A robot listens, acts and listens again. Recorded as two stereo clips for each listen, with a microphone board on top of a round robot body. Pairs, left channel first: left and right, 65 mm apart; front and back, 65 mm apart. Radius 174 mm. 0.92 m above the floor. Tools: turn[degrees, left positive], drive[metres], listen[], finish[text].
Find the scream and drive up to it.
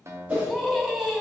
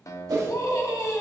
Action: drive[1.0]
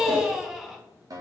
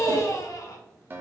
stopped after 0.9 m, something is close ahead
Action: finish[Arrived at the scream, straight ahead.]